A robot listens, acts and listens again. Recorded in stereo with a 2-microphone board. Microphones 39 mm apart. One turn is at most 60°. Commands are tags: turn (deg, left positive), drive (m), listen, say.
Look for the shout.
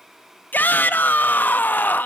<turn deg="50"/>
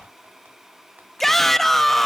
<turn deg="10"/>
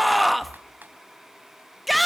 <say>Found it: a shout, straight ahead, 1 to 2 m away.</say>